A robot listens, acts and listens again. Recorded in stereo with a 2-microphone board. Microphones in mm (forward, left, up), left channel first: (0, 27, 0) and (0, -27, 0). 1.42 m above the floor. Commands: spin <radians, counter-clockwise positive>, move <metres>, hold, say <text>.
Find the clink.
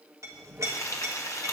spin -1.13
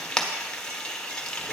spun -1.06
spin -0.87
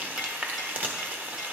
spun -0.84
hold
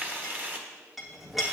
say Found it: a clink, straight ahead, 1 to 2 m away.